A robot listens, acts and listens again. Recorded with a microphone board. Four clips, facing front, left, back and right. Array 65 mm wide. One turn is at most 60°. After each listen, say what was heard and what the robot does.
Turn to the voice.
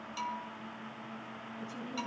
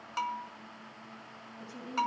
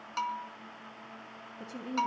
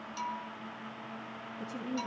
The woman speaking: 145° right. Turn 60° right.
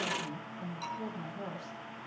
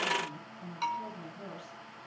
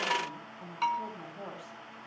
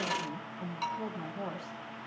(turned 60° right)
The woman speaking is now 105° right. Turn 60° right.
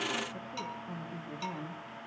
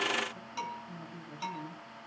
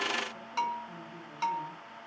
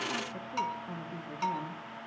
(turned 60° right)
The woman speaking is now 75° right. Turn 60° right.
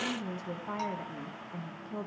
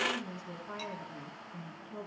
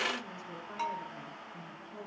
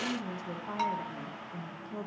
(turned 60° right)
The woman speaking is now 25° right. Turn 25° right.
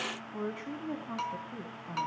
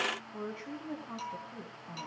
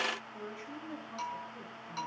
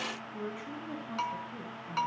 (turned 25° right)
The woman speaking is now 10° left. Turn 10° left.
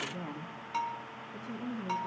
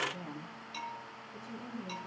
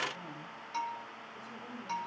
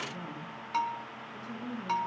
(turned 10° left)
Found it: a woman speaking, straight ahead, over 4 m away.